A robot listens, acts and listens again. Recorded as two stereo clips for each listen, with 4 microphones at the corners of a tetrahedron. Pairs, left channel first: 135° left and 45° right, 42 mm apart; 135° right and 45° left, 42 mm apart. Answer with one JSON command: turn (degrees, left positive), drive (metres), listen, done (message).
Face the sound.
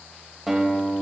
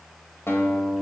{"turn": -135}
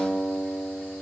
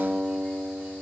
{"turn": -25}
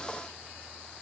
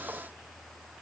{"listen": true}
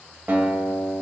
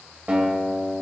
{"turn": -10}
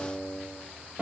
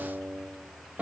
{"done": "Facing the guitar."}